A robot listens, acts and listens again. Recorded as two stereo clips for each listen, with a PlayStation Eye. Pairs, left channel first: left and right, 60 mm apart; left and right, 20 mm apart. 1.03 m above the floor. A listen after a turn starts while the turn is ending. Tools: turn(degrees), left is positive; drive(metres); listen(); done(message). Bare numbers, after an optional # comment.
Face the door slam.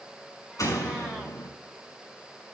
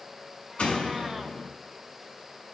turn(90)
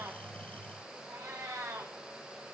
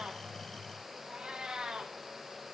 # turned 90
done("I heard a door slam from this way, but can't make it out now.")